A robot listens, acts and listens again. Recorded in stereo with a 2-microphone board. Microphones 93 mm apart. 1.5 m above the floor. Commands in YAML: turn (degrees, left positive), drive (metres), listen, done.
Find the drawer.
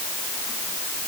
listen: true
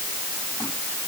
listen: true
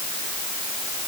done: "I can't make out a drawer."